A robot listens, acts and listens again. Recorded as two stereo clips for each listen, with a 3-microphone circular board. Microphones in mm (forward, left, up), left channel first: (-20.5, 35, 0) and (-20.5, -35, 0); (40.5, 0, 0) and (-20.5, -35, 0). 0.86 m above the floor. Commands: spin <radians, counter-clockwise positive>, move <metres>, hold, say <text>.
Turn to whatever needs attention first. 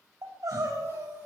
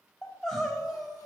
spin -0.96
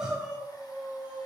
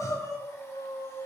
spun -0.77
spin -0.26
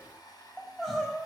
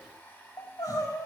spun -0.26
say Facing the crying, over 4 m away.